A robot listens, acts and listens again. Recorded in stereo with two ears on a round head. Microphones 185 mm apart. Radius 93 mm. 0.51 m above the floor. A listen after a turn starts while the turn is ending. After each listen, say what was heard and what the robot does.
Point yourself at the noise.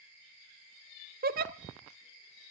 The giggle: about 45° right or 135° right. Turn 45° right.
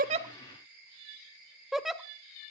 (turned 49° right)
Facing the giggle, 1 to 2 m away.